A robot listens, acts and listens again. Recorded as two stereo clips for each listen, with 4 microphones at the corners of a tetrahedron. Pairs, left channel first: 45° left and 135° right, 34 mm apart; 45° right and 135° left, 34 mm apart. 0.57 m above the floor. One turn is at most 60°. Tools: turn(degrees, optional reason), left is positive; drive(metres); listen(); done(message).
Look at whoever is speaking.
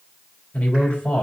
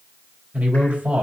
turn(degrees=60, reason="The man speaking: 100° left.")
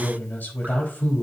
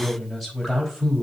turn(degrees=50, reason="The man speaking is now 50° left.")
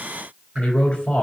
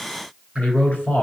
done("Found it: a man speaking, straight ahead.")